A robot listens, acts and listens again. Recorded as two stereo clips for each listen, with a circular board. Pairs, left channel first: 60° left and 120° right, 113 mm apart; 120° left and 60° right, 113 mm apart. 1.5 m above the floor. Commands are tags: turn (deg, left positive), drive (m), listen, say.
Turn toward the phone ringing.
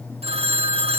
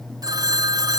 <turn deg="-110"/>
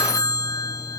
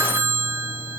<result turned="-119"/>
<turn deg="10"/>
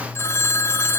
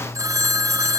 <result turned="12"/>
<say>Found it: a phone ringing, straight ahead.</say>